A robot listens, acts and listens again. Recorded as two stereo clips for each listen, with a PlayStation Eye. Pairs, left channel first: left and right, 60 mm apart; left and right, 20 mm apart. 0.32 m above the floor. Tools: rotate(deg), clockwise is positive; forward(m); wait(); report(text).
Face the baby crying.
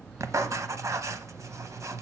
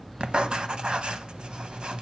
wait()
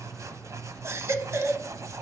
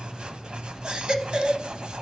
rotate(50)
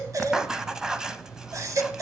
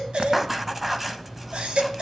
rotate(70)
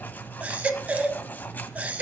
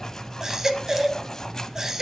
rotate(25)
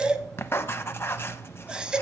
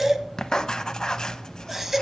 rotate(15)
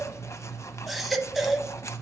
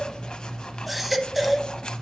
report("Facing the baby crying.")